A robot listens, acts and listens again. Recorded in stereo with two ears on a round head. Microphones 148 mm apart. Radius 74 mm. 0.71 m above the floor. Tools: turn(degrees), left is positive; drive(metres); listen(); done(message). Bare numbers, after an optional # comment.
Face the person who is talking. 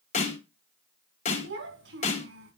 turn(-90)
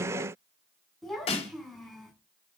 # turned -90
done("Facing the child speaking, over 4 m away.")